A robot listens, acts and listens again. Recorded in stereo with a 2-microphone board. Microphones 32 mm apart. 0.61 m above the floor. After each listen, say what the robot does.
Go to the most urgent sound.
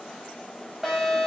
Turn 30° right.
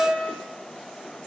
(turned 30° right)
Turn 135° right.
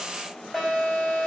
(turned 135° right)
Turn 20° left.
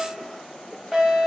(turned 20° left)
Drive 1.0 m forward.
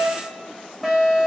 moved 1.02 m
Drive 1.0 m forward.
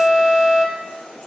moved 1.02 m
Turn 10° left.
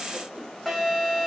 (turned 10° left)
Drive 1.0 m forward.
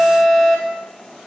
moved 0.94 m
Drive 1.0 m forward.
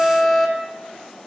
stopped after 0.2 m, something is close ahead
I am next to the alarm.